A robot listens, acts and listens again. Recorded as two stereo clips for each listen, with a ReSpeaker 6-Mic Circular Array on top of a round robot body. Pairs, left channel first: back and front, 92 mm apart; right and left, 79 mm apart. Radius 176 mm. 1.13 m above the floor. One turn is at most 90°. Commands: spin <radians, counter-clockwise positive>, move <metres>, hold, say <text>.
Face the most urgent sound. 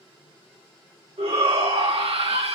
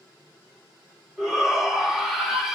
say Facing the shout, 1 to 2 m away.